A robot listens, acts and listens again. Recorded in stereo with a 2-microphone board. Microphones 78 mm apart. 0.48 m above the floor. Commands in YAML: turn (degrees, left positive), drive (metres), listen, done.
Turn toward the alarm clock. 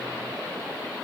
listen: true
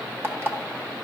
turn: -30
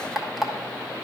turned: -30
done: "Facing the alarm clock."